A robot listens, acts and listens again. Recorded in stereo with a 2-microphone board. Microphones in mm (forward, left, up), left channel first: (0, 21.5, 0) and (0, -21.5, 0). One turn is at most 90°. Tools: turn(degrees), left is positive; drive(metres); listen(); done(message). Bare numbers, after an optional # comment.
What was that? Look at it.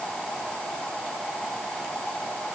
listen()
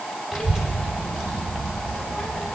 turn(-30)
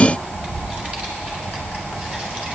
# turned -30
# So it is at 145° right.
turn(-90)
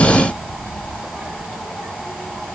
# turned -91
# The child speaking is now 55° right.
turn(-55)
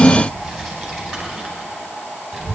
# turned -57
done("Facing the child speaking, over 4 m away.")